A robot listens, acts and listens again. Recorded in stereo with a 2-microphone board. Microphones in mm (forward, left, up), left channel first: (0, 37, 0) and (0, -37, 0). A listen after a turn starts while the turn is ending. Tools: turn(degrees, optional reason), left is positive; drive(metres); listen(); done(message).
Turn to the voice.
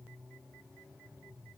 listen()
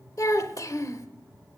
turn(degrees=45, reason="The child speaking: about 45° left or 135° left.")
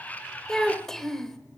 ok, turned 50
done("Facing the child speaking.")